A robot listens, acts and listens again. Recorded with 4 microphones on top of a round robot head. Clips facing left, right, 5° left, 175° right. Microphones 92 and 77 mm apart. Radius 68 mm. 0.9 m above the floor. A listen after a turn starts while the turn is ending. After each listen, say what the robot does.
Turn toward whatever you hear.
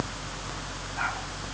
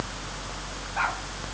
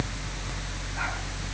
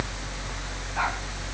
Keep listening.
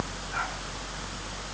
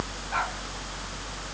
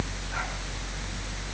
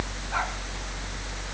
Keep listening.
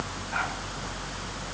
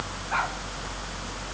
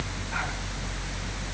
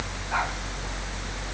I can't make out anything to turn to.